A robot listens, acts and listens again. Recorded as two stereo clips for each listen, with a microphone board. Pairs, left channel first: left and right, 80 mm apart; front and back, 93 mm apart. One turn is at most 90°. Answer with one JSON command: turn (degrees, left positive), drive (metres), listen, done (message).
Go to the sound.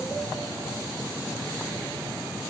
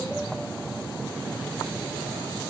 {"listen": true}
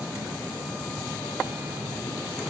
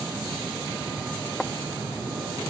{"listen": true}
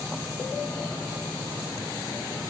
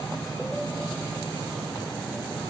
{"done": "I can't make out anything to turn to."}